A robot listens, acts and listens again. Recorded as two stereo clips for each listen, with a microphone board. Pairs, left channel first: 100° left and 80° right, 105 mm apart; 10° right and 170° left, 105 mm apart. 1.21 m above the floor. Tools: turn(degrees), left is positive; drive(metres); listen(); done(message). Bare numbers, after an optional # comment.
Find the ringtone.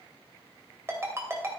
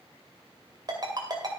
# The ringtone: 145° right.
turn(-145)
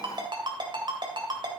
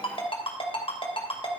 # The ringtone is now 35° right.
turn(-35)
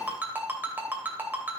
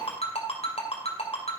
done("Found it: a ringtone, straight ahead.")